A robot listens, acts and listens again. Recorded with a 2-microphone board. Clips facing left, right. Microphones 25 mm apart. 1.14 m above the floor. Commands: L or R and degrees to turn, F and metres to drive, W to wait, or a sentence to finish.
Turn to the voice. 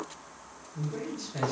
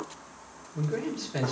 R50
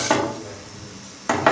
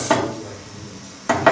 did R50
Found it: a man speaking, straight ahead.